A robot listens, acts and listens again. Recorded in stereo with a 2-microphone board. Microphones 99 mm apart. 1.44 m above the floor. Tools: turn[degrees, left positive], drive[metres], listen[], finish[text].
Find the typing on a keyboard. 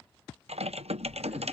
Action: turn[-90]
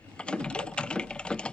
Thought: So it is at 10° left.
Action: turn[10]
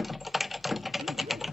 Action: finish[Found it: typing on a keyboard, straight ahead.]